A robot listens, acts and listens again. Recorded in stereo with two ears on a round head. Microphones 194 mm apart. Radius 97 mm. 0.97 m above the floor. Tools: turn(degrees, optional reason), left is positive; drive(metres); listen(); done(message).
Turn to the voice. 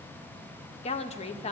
turn(degrees=30, reason="The woman speaking: about 30° left or 150° left.")
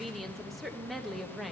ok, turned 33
done("Facing the woman speaking.")